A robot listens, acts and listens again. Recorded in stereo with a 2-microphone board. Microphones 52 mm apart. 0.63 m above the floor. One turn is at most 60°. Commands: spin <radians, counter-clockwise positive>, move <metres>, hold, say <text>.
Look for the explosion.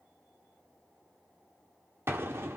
spin -0.87
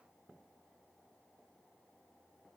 hold
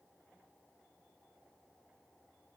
say I heard an explosion, but can't make it out now. It was about straight ahead or 80° right.